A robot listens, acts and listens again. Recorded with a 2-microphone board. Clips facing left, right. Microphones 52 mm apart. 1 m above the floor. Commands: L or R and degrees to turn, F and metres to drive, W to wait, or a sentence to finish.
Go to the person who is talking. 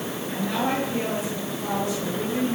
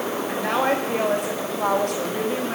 R60
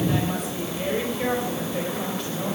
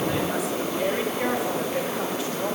F1.0
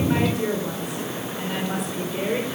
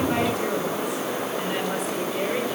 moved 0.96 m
F1.0
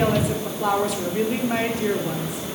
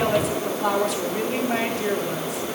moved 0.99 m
F1.0
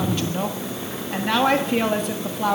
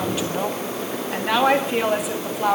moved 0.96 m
F1.0
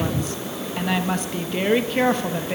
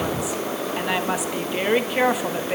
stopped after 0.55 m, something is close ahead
R10
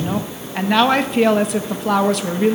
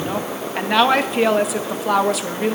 Arrived at the woman speaking, straight ahead.